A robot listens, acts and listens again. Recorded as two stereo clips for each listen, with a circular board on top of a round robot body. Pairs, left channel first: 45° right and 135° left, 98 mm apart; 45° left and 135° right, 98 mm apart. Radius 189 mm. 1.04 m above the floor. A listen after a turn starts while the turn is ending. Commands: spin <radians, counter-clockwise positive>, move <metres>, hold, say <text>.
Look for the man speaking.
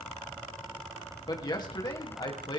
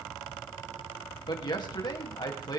say Facing the man speaking, 2 to 4 m away.